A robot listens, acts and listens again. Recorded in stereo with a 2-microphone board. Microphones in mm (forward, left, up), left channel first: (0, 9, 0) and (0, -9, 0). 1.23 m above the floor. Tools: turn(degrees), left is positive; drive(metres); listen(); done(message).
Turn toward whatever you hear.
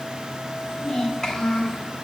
turn(degrees=35)
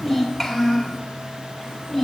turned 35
done("Facing the child speaking, 2 to 4 m away.")